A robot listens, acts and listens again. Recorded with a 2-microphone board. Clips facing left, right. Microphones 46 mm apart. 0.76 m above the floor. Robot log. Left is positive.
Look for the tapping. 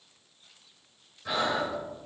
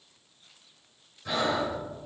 cmd idle
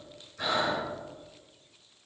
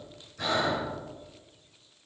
cmd idle
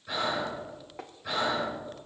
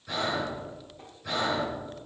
cmd yaw +90
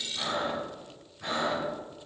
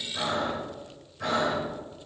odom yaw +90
cmd idle
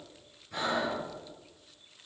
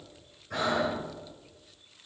cmd idle
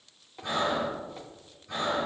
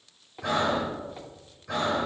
note: The tapping is now 10° right.
cmd yaw -10
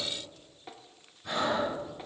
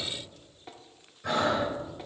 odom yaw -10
end: Facing the tapping.